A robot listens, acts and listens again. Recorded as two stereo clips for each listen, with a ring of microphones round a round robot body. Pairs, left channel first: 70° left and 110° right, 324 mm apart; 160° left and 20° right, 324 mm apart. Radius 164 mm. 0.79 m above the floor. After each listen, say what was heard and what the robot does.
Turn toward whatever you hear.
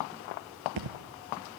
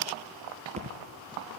The thud: 95° right. Turn 95° right.
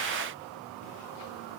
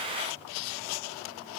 I heard a thud from this way, but can't make it out now.